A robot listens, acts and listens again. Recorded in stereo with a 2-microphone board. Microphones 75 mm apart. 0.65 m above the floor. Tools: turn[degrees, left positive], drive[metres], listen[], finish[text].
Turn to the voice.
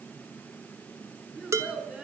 Action: turn[-30]
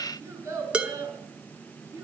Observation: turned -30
Thought: So it is at 140° right.
Action: turn[-140]
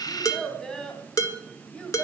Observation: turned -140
Thought: The child speaking is now 10° left.
Action: turn[10]
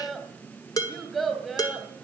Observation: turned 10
Action: finish[Facing the child speaking.]